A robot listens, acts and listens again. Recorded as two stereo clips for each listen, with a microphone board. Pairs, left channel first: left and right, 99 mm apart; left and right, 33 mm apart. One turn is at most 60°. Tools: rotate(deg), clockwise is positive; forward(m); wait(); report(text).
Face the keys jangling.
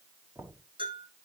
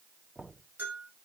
wait()
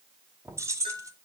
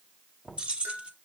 rotate(35)
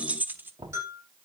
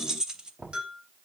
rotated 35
rotate(20)
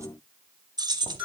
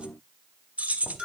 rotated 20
rotate(55)
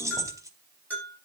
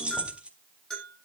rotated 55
rotate(35)
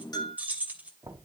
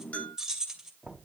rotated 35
rotate(15)
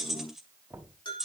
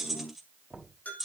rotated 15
report("Facing the keys jangling, 2 to 4 m away.")